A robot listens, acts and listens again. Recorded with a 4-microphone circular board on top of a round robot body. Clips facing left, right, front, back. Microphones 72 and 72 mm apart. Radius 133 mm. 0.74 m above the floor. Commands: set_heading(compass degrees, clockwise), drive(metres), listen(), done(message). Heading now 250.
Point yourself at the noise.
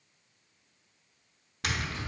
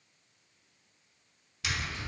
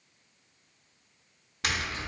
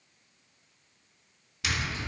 set_heading(205)
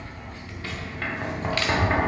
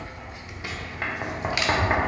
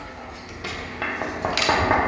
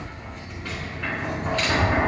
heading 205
set_heading(220)
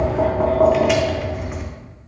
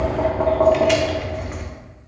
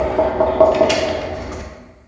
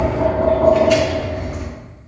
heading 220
done("Found it: tapping, straight ahead.")